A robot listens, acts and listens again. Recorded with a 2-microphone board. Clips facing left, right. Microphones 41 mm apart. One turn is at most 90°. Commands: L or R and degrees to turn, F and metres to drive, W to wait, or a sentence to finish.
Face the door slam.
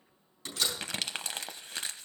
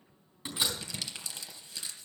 R15
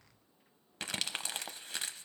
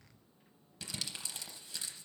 W
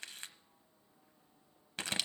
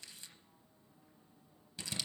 I heard a door slam, but can't make it out now. It was about straight ahead or 150° right.